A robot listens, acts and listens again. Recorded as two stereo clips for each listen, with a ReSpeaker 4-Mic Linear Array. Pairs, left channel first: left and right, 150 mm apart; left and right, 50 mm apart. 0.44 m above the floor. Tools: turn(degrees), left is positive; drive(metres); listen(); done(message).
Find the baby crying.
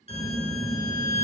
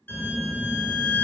listen()
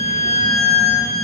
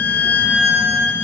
listen()
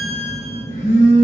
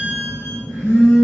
done("I can't make out a baby crying, only a violin and a phone buzzing.")